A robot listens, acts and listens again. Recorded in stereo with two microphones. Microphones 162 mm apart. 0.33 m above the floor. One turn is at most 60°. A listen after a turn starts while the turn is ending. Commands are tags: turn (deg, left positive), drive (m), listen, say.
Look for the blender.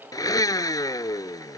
<turn deg="25"/>
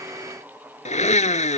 <turn deg="60"/>
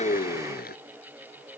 <turn deg="60"/>
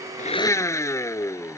<turn deg="20"/>
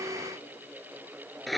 <say>Facing the blender.</say>